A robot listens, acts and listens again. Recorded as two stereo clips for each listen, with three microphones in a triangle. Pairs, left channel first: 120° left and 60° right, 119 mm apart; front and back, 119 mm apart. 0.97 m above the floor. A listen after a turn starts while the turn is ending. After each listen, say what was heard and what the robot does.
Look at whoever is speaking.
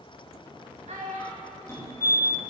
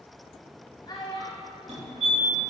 The child speaking: 55° right. Turn 55° right.
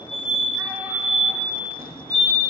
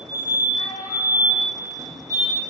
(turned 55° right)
Keep listening.
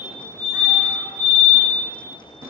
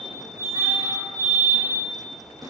Keep listening.
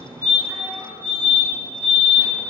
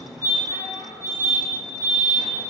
Facing where the child speaking came from. I can't hear it now.